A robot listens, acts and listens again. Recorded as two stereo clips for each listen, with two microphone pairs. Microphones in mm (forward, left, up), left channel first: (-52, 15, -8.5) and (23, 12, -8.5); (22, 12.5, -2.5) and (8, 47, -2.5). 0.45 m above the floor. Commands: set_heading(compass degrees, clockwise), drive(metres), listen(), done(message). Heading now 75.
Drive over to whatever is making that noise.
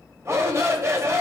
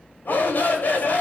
set_heading(125)
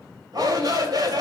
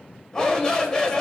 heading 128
drive(1.0)
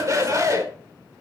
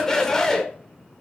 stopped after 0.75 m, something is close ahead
done("I am next to the shout.")